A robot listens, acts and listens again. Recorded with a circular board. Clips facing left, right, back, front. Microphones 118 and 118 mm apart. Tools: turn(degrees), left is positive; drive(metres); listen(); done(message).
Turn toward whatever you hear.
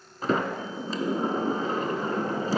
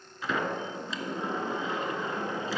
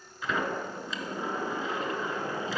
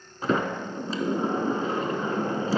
turn(degrees=45)
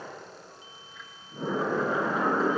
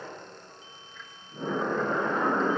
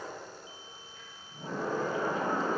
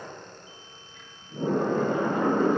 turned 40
done("Facing the sliding door.")